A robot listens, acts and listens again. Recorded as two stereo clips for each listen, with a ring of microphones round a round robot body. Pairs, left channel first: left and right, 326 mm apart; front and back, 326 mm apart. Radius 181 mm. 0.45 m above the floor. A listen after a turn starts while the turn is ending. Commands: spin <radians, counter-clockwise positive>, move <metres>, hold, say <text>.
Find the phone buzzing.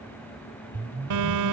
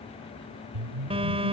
spin -1.83
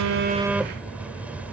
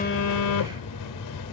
say Facing the phone buzzing.